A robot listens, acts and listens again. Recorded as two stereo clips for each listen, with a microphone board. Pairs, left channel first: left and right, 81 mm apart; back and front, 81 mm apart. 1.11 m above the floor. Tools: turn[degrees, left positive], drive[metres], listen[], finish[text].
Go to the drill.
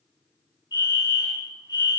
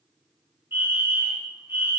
Action: listen[]
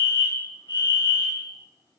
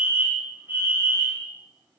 Action: listen[]
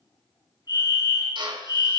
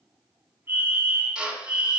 Thought: The drill: 80° right.
Action: turn[-80]
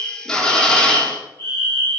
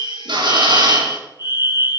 Action: drive[1.0]
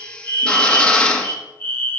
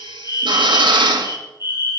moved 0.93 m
Thought: The drill is now 10° left.
Action: turn[10]
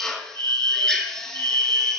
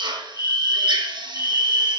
Action: drive[1.0]
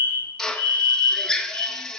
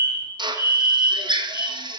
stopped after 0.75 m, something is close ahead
Action: finish[I am next to the drill.]